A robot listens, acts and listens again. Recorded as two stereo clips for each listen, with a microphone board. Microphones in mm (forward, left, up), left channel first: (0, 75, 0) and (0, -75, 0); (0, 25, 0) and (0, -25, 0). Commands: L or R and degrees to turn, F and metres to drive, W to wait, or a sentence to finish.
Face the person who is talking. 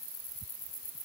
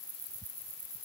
W
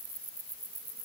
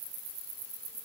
W
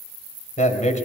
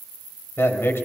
L55
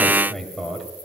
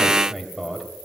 Found it: a man speaking, straight ahead, 2 to 4 m away.